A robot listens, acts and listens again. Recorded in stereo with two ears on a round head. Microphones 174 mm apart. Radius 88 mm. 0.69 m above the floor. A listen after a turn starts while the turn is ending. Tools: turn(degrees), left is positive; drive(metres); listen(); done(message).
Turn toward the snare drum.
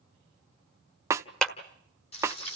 turn(degrees=-15)
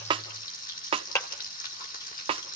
turn(degrees=-150)
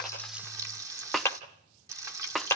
done("Facing the snare drum, under 1 m away.")